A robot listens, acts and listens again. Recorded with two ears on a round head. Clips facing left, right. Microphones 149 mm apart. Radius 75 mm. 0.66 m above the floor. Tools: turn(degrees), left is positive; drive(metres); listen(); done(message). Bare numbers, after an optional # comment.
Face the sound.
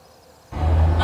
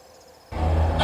# The hammering: about 55° right or 125° right.
turn(-55)
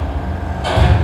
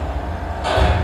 done("Found it: hammering, straight ahead.")